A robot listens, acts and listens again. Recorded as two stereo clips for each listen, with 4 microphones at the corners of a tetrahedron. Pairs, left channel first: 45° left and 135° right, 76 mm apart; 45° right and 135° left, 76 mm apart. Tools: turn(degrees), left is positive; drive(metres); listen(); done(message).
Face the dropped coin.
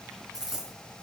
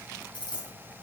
turn(degrees=-50)
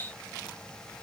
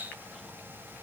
done("I heard a dropped coin from this way, but can't make it out now.")